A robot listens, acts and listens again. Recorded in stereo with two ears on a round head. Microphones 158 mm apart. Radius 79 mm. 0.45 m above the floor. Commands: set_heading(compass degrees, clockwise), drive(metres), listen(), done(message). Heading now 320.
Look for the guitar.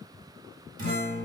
set_heading(10)
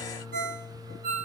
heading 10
done("Found it: a guitar, straight ahead, under 1 m away.")